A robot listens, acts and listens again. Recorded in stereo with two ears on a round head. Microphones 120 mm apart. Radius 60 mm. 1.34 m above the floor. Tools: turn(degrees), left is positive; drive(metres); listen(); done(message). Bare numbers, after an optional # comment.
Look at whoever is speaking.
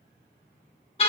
listen()
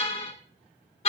listen()
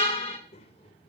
# The child speaking: about 45° left or 135° left.
turn(45)
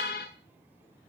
listen()
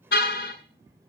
# So it is at 25° right.
turn(-25)
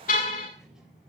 done("Facing the child speaking, 2 to 4 m away.")